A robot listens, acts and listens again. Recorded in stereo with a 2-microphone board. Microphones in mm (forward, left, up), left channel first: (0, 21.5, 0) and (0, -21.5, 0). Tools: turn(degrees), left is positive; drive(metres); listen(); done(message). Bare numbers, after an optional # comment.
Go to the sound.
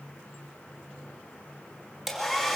turn(30)
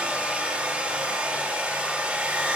# So it is at 35° right.
turn(-35)
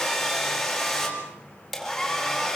drive(1.0)
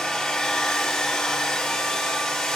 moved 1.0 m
# The hair dryer is now 10° left.
turn(10)
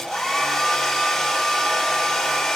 drive(1.0)
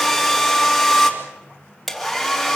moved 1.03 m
drive(1.0)
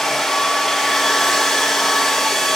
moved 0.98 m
drive(1.0)
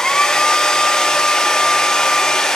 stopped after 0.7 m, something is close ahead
# The hair dryer is now 15° left.
turn(15)
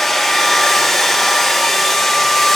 done("Arrived at the hair dryer, straight ahead.")